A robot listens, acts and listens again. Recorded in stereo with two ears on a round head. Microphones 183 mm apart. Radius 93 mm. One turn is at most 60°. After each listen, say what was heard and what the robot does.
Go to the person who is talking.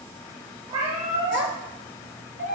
The child speaking: about 60° left or 120° left. Turn 60° left.
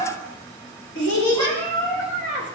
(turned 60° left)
So it is at 60° left. Turn 60° left.
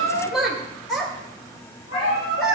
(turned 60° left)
Drive 1.0 m forward.
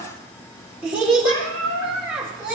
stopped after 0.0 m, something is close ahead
The child speaking is now 10° right. Turn 10° right.
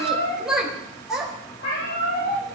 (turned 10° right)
Something is in my way. I am facing the child speaking but have not reached it.